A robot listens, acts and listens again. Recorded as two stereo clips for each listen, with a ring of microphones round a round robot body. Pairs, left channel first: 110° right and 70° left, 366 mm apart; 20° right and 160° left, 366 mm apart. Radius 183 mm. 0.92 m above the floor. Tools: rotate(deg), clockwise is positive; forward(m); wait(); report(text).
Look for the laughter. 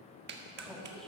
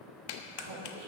rotate(-160)
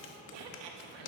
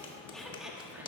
rotate(-75)
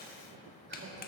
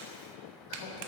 wait()
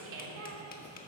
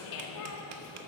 rotate(-15)
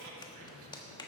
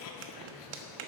rotate(-15)
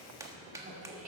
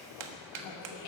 report("Facing the laughter, 2 to 4 m away.")